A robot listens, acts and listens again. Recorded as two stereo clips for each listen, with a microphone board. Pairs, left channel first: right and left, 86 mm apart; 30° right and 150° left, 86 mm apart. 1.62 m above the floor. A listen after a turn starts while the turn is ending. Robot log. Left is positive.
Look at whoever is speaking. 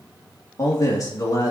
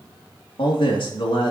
note: The man speaking: 45° right.
cmd yaw -45
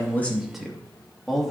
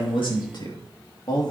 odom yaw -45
end: Found it: a man speaking, straight ahead.